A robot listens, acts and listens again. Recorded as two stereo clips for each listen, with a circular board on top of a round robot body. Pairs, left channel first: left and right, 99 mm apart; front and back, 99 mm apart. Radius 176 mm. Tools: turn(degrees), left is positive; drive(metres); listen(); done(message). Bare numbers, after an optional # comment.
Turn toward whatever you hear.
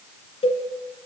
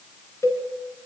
# The cowbell: 65° left.
turn(65)
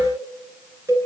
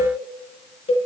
# The cowbell is now 20° right.
turn(-20)
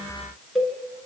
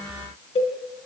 done("Facing the cowbell.")